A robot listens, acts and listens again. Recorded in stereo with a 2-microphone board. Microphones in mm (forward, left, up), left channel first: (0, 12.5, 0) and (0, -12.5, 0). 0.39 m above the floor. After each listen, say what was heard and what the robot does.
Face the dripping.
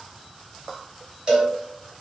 Keep listening.
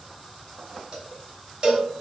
Keep listening.
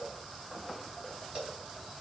I can't make out dripping, only a cowbell.